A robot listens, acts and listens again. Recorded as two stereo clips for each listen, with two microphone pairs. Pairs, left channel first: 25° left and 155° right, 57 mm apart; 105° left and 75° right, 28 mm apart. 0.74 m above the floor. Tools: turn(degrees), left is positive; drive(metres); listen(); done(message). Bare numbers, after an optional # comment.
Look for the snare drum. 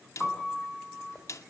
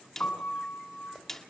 # The snare drum: 30° left.
turn(30)
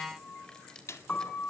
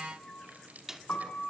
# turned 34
done("Facing the snare drum.")